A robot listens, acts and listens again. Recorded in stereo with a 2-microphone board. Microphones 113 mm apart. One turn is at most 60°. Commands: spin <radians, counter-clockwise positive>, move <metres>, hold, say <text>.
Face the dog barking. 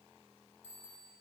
hold
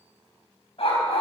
spin 1.05
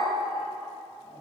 hold
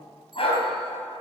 spin 0.96
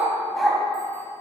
say Found it: a dog barking, straight ahead, 2 to 4 m away.